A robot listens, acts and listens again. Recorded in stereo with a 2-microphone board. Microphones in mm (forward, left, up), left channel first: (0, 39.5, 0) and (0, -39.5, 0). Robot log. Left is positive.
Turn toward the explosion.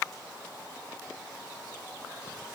cmd idle
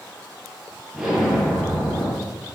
cmd yaw -30
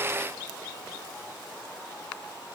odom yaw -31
cmd idle
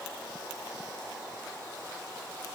end: I heard an explosion, but can't make it out now. It was about 25° left or 145° right.